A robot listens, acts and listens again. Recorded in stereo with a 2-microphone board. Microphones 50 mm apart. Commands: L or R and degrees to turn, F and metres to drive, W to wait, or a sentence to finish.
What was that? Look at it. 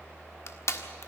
L70
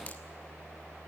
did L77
W
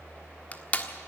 L30
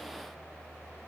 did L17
L15
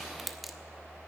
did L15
Found it: crushing, straight ahead.